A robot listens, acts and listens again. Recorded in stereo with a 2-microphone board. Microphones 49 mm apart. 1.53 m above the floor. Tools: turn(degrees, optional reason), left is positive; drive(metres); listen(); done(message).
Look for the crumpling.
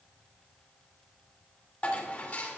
listen()
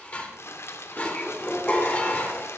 turn(degrees=60, reason="The crumpling: about 60° left or 120° left.")
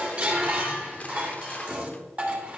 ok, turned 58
listen()
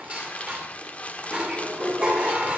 turn(degrees=30, reason="So it is at 30° left.")
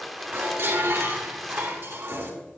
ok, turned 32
done("Facing the crumpling.")